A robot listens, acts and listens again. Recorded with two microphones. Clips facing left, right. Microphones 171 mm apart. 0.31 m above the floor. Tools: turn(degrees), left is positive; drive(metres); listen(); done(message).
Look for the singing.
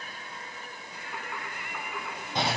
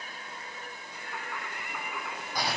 turn(degrees=30)
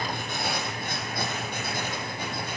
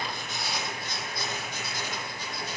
listen()
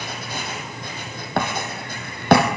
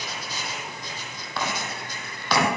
listen()
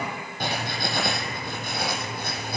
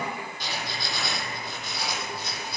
done("I heard singing, but can't make it out now. It was about 30° right or 150° left.")